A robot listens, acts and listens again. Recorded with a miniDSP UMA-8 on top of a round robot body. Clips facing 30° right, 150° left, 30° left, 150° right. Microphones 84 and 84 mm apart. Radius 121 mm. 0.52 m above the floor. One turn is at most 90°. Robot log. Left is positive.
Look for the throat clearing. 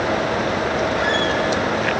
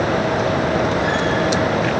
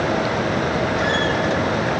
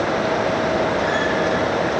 cmd idle
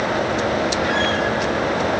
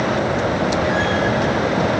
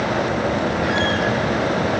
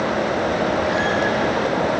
cmd idle
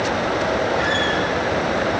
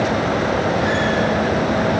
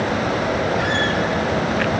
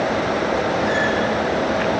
end: I can't make out throat clearing.